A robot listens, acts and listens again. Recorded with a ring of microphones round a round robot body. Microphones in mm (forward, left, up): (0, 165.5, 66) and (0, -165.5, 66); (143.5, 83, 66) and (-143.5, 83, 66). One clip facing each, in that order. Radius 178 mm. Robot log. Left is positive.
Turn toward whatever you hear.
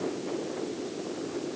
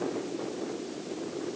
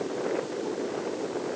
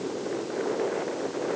cmd idle
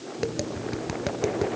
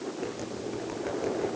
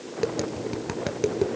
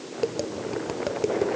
note: The tapping: 60° left.
cmd yaw +60
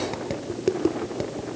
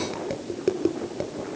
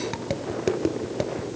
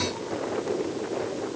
end: Found it: tapping, straight ahead, 2 to 4 m away.